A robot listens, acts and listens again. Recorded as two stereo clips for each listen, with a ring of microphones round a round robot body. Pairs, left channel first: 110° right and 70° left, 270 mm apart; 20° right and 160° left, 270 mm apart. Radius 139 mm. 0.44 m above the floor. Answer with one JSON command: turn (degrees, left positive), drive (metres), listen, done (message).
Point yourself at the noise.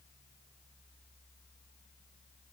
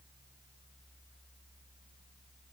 {"listen": true}
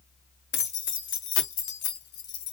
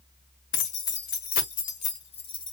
{"turn": -95}
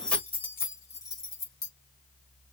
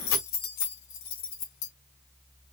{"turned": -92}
{"turn": -35}
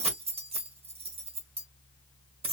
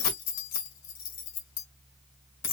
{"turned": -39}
{"done": "Facing the keys jangling, 1 to 2 m away."}